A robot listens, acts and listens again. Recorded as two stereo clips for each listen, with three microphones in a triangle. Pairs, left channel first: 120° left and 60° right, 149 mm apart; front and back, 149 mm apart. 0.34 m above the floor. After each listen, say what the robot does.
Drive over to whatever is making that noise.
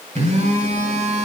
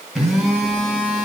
Turn 90° right.
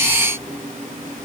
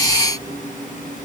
Turn 25° right.
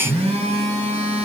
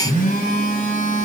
Turn 15° right.
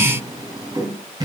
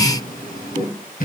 Drive 1.0 m forward.
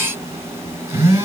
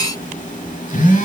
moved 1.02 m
Drive 1.0 m forward.
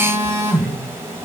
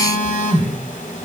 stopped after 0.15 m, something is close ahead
Turn 10° left.
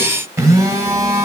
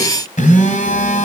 I am next to the phone buzzing.